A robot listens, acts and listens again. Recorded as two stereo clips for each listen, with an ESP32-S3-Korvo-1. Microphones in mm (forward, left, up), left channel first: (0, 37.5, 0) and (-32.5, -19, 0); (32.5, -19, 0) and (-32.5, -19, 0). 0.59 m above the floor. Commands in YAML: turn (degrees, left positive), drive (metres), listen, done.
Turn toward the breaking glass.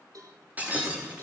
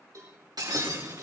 turn: 175
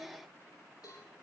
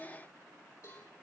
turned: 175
done: "Facing where the breaking glass came from. I can't hear it now."